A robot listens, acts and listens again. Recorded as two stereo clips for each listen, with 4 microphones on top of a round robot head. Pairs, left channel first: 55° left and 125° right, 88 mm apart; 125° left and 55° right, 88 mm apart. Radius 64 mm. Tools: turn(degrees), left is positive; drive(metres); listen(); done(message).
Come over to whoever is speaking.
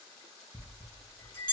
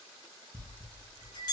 listen()
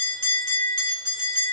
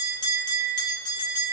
listen()
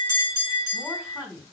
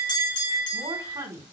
turn(degrees=-55)
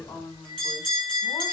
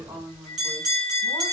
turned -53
drive(metres=1.0)
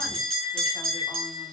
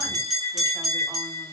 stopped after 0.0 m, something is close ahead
listen()
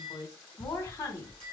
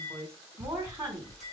done("Blocked. The woman speaking is further on, straight ahead.")